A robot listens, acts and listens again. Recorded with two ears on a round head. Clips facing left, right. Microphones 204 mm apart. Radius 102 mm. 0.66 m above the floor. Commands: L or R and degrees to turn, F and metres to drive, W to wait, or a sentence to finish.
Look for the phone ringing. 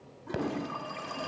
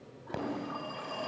L30
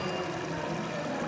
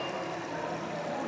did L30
L140
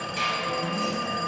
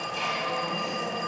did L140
L20
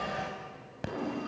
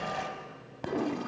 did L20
Found it: a phone ringing, straight ahead, 2 to 4 m away.